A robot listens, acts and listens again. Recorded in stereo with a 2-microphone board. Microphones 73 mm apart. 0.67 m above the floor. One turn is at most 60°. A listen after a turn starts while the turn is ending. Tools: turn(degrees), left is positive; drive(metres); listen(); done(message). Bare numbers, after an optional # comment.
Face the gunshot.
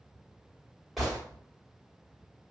turn(30)
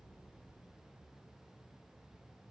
listen()
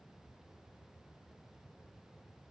done("I heard a gunshot, but can't make it out now. It was about 30° right or 150° left.")